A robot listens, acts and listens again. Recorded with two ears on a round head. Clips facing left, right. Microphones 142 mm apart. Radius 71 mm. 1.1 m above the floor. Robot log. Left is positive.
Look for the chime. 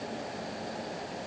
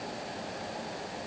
cmd idle
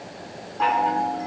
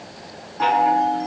cmd yaw -30
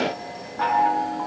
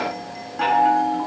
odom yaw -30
note: So it is at 145° right.
cmd yaw -145
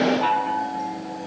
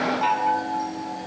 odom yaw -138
end: Found it: a chime, straight ahead, over 4 m away.